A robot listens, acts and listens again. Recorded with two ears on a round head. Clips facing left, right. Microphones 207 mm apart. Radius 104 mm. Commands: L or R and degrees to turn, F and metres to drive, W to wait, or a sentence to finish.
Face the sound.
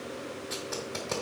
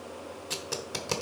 R45
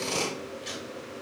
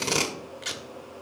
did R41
R95
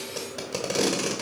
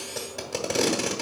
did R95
Found it: tape being pulled, straight ahead.